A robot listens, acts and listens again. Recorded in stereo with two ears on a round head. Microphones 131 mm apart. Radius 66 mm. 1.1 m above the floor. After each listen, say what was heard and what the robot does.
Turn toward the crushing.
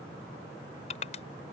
The crushing: about 45° left or 135° left. Turn 45° left.
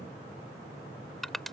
Found it: crushing, straight ahead.